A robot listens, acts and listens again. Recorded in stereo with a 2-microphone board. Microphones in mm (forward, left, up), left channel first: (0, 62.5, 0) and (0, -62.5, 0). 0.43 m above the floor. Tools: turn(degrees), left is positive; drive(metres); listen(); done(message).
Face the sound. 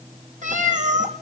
turn(degrees=-90)
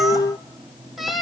done("Found it: a cat meowing, straight ahead.")